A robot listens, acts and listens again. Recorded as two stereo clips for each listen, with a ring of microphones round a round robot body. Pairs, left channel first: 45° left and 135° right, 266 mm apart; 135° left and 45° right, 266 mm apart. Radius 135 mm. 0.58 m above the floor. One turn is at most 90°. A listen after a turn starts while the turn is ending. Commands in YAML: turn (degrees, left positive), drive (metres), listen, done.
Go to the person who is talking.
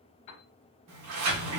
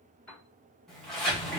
listen: true
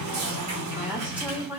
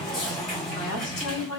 turn: 90
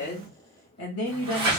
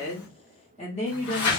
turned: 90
turn: 70
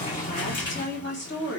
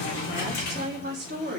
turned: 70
drive: 1.0
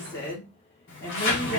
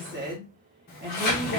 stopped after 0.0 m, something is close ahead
done: "Blocked. The woman speaking is further on, straight ahead."